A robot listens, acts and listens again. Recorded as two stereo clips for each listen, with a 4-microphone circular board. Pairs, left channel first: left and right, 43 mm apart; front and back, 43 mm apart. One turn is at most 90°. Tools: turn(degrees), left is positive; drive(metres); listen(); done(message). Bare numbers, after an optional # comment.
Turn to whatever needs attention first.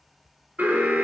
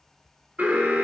# The alarm: 130° right.
turn(-90)
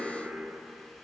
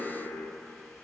# The alarm is now 30° right.
turn(-30)
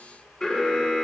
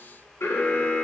# The alarm is now 15° left.
turn(15)
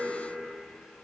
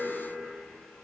done("Facing the alarm.")